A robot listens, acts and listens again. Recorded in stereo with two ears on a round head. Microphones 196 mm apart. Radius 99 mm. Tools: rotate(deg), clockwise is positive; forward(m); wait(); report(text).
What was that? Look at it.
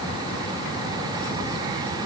wait()
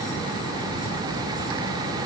wait()
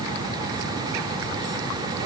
report("I can't make out anything to turn to.")